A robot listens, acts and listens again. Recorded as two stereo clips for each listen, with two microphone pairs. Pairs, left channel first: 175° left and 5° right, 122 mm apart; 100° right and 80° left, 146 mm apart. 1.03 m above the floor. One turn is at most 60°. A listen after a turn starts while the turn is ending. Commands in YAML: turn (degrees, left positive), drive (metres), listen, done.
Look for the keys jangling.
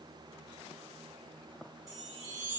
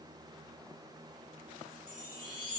listen: true
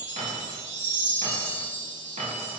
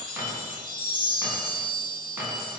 turn: 10
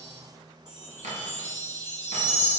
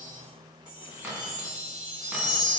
done: "Found it: keys jangling, straight ahead, 1 to 2 m away."